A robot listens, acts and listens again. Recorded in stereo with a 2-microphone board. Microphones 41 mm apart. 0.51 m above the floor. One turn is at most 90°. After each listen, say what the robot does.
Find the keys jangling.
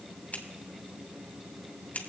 Keep listening.
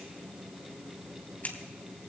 Keep listening.
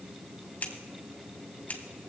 I can't make out keys jangling to turn to.